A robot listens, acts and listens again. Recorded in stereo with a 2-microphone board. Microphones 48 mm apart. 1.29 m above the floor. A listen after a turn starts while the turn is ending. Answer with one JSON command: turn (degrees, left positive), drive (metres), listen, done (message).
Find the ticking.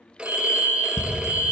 {"turn": 50}
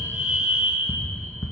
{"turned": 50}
{"turn": 75}
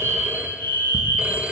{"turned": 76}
{"listen": true}
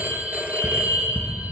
{"done": "Facing the ticking, 1 to 2 m away."}